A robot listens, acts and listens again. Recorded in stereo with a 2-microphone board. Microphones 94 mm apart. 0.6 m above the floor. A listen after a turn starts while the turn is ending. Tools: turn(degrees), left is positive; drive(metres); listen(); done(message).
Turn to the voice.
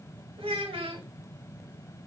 turn(degrees=-90)
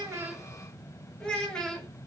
turn(degrees=10)
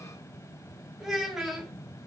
done("Found it: a child speaking, straight ahead, under 1 m away.")